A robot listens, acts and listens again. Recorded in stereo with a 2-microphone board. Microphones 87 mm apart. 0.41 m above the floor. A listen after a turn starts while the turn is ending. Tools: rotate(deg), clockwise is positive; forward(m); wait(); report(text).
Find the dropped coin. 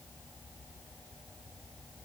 wait()
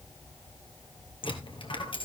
rotate(-75)
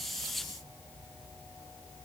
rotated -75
wait()
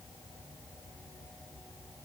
report("I heard a dropped coin, but can't make it out now. It was about straight ahead or 30° left.")